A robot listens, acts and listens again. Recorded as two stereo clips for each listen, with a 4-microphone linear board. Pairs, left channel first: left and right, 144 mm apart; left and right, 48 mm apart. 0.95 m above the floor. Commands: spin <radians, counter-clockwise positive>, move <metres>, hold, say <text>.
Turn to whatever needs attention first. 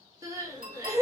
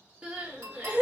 spin -0.35
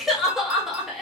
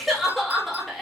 say Facing the crying, 1 to 2 m away.